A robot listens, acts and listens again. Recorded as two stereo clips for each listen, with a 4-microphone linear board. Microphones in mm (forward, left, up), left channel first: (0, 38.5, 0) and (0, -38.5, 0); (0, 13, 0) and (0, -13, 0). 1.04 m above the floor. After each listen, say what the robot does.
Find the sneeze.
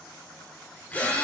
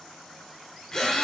Keep listening.
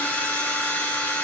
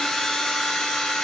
Keep listening.
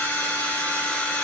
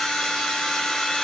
I can't make out a sneeze, only a drill.